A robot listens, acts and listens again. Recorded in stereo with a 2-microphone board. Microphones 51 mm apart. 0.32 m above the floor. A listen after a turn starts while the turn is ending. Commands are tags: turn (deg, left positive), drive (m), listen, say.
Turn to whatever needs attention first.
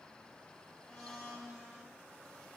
<listen/>
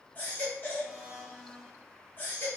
<turn deg="35"/>
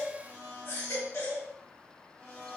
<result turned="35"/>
<turn deg="100"/>
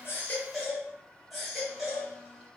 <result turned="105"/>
<say>Found it: a baby crying, straight ahead, 1 to 2 m away.</say>